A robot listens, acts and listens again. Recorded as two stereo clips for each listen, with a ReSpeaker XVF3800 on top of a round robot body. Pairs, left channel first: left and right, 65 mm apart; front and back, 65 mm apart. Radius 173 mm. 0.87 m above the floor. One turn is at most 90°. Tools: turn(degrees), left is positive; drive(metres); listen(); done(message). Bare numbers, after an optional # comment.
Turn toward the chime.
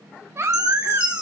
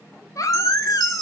# The chime: 145° left.
turn(90)
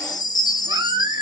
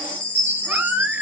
# The chime is now 75° left.
turn(75)
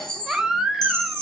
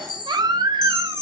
# The chime is now 10° left.
turn(10)
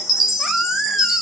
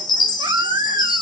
done("Facing the chime.")